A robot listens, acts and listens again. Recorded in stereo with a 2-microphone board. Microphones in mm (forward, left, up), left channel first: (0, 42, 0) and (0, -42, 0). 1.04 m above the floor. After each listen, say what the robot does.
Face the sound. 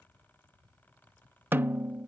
Turn 25° right.
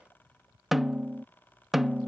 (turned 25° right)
Facing the snare drum.